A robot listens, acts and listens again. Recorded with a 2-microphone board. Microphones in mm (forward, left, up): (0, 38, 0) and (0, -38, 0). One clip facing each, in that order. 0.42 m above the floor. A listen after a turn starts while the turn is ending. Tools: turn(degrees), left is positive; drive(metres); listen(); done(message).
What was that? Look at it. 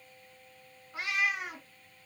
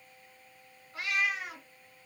turn(degrees=20)
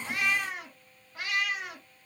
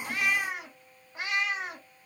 turn(degrees=-30)
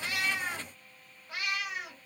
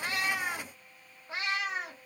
turn(degrees=-35)
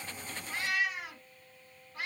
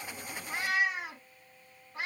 turn(degrees=-25)
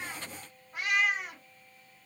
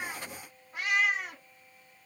done("Found it: a cat meowing, straight ahead.")